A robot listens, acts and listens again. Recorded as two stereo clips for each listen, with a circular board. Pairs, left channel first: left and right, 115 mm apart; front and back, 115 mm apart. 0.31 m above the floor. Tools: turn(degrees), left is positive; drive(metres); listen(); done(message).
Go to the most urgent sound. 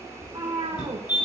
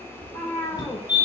turn(degrees=45)
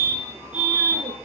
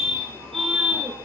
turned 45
turn(degrees=-10)
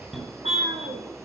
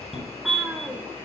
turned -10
drive(metres=1.0)
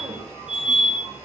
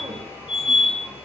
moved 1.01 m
turn(degrees=-10)
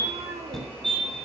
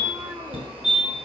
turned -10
drive(metres=1.0)
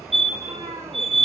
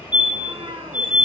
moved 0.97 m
drive(metres=1.0)
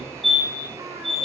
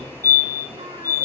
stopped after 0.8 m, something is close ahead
done("I am next to the fire alarm.")